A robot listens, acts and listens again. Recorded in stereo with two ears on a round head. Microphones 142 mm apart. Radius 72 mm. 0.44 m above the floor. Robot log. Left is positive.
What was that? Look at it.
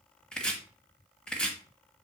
cmd yaw +30
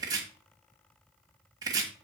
note: So it is at 25° right.
cmd yaw -25
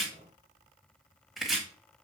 end: Found it: chopping, straight ahead.